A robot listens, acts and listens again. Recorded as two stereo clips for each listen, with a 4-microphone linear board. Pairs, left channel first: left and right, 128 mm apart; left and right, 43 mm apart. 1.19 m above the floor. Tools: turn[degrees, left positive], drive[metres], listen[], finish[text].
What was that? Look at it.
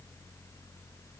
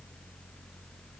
Action: listen[]
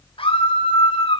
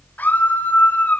Thought: The scream: about 50° left or 130° left.
Action: turn[50]
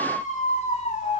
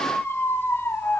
Thought: So it is at 80° left.
Action: turn[80]
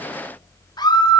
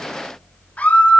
Thought: The scream is now 35° left.
Action: turn[35]
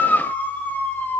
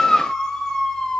Thought: The scream is now 15° left.
Action: turn[15]
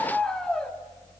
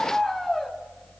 Action: finish[Found it: a scream, straight ahead, 2 to 4 m away.]